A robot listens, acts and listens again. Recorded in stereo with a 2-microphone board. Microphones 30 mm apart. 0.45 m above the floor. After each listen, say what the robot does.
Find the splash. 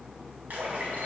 Turn 50° right.
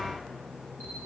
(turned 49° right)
Keep listening.
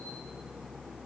I heard a splash, but can't make it out now. It was about 5° right or 80° right.